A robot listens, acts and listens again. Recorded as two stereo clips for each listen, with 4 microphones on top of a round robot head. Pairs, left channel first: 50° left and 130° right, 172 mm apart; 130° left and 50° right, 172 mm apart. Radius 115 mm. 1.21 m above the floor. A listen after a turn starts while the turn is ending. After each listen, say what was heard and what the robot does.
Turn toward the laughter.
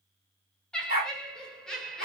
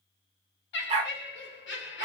The laughter: 135° left. Turn 135° left.
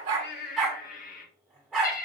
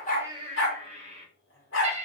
Found it: laughter, straight ahead.